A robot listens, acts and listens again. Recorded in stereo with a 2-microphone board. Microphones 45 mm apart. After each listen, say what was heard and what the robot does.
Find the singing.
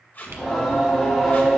Turn 30° left.
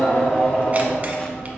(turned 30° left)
So it is at 165° left. Turn 165° left.
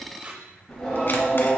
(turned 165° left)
The singing is now 15° left. Turn 15° left.
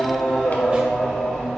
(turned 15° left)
Found it: singing, straight ahead.